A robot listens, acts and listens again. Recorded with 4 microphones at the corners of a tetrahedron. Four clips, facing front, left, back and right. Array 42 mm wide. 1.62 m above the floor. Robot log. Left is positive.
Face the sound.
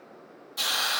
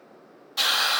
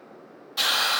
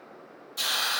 note: The hiss: 135° left.
cmd yaw +135
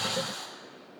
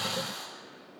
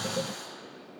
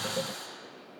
note: The hiss is now 25° left.
cmd yaw +25
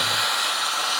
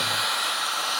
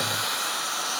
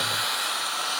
end: Facing the hiss.